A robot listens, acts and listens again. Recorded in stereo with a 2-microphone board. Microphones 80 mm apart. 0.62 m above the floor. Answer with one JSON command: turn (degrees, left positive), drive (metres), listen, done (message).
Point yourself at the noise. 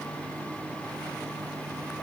{"listen": true}
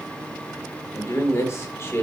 {"turn": 35}
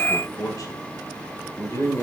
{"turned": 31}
{"turn": 40}
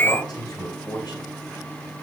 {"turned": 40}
{"turn": 110}
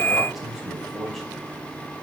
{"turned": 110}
{"done": "Found it: a man speaking, straight ahead, 2 to 4 m away."}